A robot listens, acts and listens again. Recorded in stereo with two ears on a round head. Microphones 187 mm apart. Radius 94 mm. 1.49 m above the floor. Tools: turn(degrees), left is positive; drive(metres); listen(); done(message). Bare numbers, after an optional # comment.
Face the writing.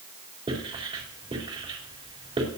# The writing: about 30° right or 150° right.
turn(-30)
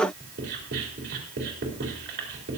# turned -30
# So it is at 120° right.
turn(-120)
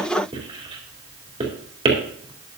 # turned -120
# The writing is now 25° right.
turn(-25)
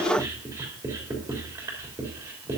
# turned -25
# The writing is now 15° right.
turn(-15)
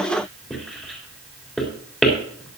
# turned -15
done("Facing the writing.")